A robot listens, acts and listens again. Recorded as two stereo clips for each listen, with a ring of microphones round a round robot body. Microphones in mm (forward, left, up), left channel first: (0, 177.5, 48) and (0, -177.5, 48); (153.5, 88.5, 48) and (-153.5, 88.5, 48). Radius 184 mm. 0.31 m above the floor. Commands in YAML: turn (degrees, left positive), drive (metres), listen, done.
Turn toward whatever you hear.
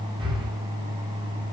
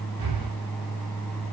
turn: -165
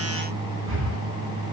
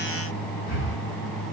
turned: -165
turn: -35
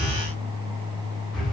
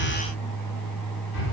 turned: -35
done: "Found it: breathing, straight ahead, over 4 m away."